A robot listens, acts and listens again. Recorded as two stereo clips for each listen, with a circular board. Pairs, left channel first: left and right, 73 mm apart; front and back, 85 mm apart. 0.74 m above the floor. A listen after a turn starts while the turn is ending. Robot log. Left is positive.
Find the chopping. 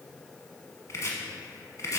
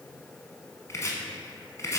note: The chopping: 50° left.
cmd yaw +50
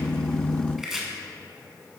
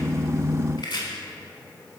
end: Found it: chopping, straight ahead.